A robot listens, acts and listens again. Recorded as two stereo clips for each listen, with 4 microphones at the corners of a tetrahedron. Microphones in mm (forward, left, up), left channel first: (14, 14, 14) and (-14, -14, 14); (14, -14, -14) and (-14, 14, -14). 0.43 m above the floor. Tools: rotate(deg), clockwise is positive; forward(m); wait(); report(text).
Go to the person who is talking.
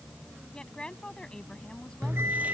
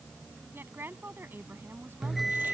rotate(-110)
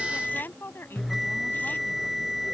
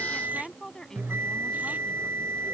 rotate(-30)
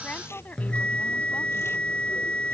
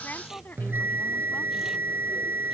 forward(1.0)
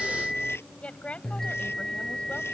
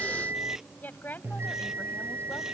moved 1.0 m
rotate(15)
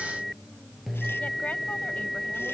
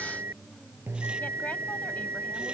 wait()
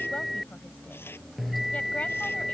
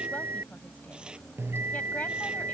wait()
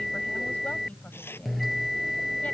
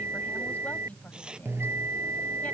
report("I heard a woman speaking from this way, but can't make it out now. I did not reach it.")